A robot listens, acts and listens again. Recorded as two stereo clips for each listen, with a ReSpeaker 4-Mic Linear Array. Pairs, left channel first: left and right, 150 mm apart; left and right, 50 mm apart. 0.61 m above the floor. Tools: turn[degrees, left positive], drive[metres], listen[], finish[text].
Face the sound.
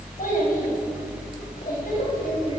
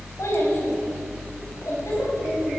Thought: The child speaking: about 70° left or 110° left.
Action: turn[70]
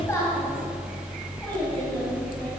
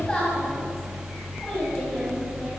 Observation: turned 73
Thought: So it is at 20° left.
Action: turn[20]
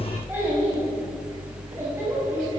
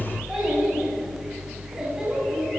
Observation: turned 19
Thought: The child speaking is now 15° right.
Action: turn[-15]
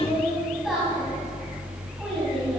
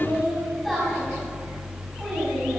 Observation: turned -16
Action: finish[Found it: a child speaking, straight ahead, 2 to 4 m away.]